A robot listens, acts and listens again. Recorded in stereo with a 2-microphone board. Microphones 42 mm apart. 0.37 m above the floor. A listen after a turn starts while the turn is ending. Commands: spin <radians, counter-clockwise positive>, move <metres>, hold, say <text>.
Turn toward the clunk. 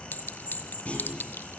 spin 0.44
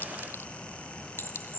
hold
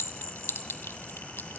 say I heard a clunk, but can't make it out now. It was about straight ahead or 130° left.